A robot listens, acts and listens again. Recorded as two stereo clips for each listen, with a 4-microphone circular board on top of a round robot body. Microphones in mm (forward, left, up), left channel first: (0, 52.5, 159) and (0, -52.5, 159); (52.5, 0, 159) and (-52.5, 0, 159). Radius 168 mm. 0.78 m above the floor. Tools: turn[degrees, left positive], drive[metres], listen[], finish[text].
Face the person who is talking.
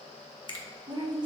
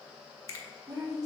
Thought: The woman speaking: 130° right.
Action: turn[-130]
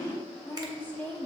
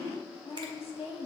Thought: The woman speaking is now 15° left.
Action: turn[15]
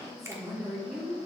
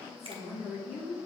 Action: finish[Facing the woman speaking, 2 to 4 m away.]